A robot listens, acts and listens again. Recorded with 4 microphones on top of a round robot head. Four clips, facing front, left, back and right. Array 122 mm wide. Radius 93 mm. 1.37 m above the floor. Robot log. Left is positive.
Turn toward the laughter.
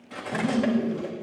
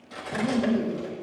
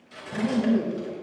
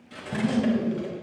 note: The laughter: 150° left.
cmd yaw +150
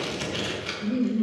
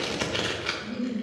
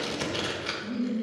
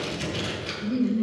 note: The laughter is now 35° right.
cmd yaw -35
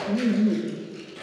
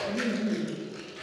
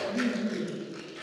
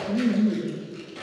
note: The laughter is now 10° right.
cmd yaw -10
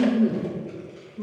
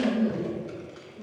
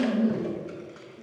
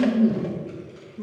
note: The laughter is now 25° right.
cmd yaw -25
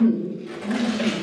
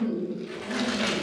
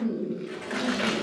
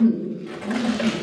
note: The laughter is now 15° right.
cmd yaw -15
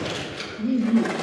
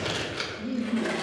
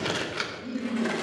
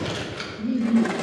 end: Found it: laughter, straight ahead, 1 to 2 m away.